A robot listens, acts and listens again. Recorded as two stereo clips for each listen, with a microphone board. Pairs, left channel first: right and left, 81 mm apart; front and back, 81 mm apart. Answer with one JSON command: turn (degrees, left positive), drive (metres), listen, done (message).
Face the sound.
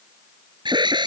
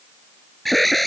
{"turn": 90}
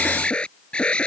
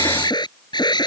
{"turn": -15}
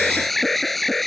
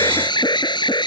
{"done": "Found it: an alarm, straight ahead."}